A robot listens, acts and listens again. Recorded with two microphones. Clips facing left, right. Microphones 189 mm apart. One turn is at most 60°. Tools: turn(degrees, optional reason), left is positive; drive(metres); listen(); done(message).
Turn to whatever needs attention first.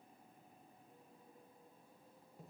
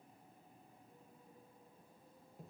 listen()
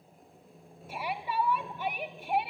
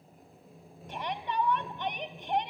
turn(degrees=30)
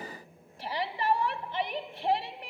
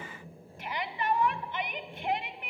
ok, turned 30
turn(degrees=60, reason="So it is at 140° left.")
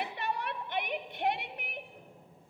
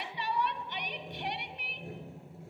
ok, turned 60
turn(degrees=60, reason="The shout is now 80° left.")
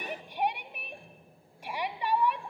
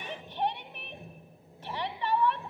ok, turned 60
turn(degrees=15, reason="The shout is now 15° left.")
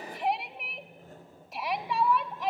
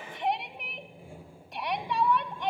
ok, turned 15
done("Facing the shout.")